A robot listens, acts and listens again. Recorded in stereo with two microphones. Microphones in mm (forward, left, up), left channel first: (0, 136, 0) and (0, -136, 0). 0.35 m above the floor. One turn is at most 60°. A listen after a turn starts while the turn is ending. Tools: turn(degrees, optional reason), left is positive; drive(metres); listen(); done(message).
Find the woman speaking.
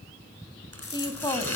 turn(degrees=30)
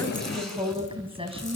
turn(degrees=-20, reason="So it is at 20° right.")
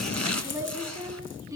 turn(degrees=-10, reason="The woman speaking is now 10° right.")
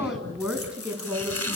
done("Facing the woman speaking.")